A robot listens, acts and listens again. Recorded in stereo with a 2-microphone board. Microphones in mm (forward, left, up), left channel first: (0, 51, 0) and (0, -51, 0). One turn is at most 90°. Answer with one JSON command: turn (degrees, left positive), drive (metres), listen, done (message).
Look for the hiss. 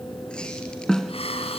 {"turn": 90}
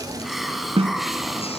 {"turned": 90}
{"done": "Found it: a hiss, straight ahead, 2 to 4 m away."}